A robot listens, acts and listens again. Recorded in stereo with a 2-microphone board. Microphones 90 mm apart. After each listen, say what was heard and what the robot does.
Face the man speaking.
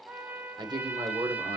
The man speaking: about 50° right or 130° right. Turn 50° right.
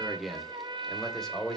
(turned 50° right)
Found it: a man speaking, straight ahead.